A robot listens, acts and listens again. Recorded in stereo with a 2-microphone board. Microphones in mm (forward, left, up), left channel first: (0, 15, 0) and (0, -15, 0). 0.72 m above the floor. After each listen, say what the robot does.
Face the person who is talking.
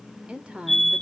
Turn 35° right.
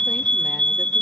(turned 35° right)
Keep listening.
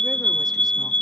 Keep listening.
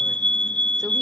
I heard a woman speaking, but can't make it out now. It was about straight ahead or 110° right.